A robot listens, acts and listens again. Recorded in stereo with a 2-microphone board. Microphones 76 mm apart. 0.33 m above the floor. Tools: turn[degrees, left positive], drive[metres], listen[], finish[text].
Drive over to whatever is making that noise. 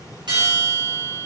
Thought: The bell: about 70° right or 110° right.
Action: turn[-70]
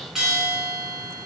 Action: drive[1.0]
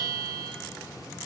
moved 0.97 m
Action: drive[1.0]
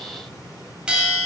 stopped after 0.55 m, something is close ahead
Thought: The bell is now 15° right.
Action: turn[-15]
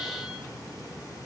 Action: listen[]
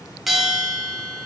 Action: finish[I am next to the bell.]